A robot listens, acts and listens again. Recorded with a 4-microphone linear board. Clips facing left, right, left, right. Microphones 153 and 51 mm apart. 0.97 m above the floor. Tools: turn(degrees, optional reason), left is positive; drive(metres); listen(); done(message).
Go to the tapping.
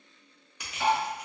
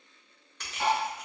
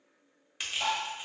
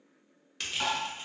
turn(degrees=-65, reason="The tapping: about 65° right or 115° right.")
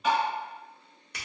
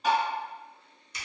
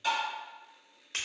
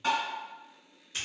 turn(degrees=-40, reason="So it is at 40° right.")
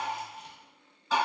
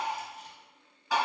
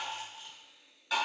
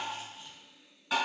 turn(degrees=-15, reason="The tapping is now 15° right.")
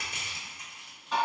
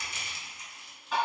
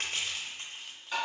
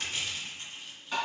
drive(metres=1.0)
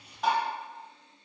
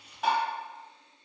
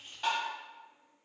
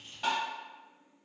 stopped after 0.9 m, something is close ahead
done("Arrived at the tapping, straight ahead.")